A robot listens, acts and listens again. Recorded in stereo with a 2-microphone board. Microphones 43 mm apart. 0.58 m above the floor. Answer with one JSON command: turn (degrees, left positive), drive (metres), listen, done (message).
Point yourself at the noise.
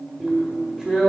{"turn": -30}
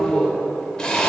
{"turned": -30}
{"turn": 15}
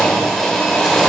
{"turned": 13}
{"done": "Facing the drill."}